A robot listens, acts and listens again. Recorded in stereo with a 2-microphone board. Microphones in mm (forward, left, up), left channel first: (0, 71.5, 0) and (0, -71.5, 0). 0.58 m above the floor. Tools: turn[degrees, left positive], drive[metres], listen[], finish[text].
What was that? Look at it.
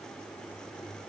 Action: listen[]
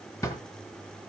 Thought: The drawer: about 20° left or 160° left.
Action: turn[20]
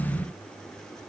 Action: listen[]
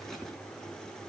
Action: listen[]
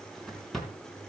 Action: finish[Facing the drawer, 2 to 4 m away.]